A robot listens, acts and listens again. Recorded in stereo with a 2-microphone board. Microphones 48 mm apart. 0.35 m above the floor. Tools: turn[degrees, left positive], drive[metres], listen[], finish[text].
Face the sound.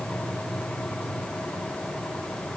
Action: listen[]
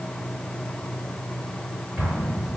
Thought: The explosion: about 35° right or 145° right.
Action: turn[-35]
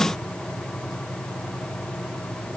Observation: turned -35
Action: listen[]
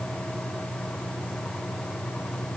Action: finish[I heard an explosion, but can't make it out now. It was about straight ahead or 110° right.]